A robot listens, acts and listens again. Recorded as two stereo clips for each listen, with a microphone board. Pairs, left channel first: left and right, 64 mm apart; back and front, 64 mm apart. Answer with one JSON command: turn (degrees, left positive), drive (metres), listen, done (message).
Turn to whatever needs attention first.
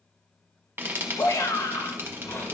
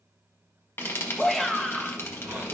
{"turn": 95}
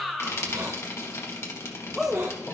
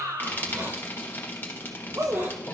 {"done": "Found it: a shout, straight ahead."}